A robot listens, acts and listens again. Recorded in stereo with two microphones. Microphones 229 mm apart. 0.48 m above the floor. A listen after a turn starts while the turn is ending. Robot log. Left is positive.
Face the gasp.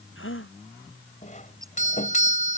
note: The gasp: about 70° left or 110° left.
cmd yaw +70
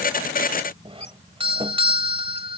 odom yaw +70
cmd idle
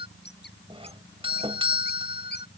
end: I heard a gasp, but can't make it out now. It was about straight ahead or 40° left.